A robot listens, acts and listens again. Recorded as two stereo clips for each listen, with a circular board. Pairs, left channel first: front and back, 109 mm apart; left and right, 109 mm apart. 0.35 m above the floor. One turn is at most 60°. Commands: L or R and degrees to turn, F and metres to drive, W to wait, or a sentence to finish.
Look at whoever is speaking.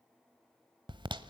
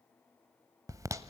W
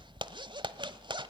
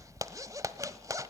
W
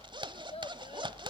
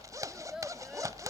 Found it: a child speaking, straight ahead.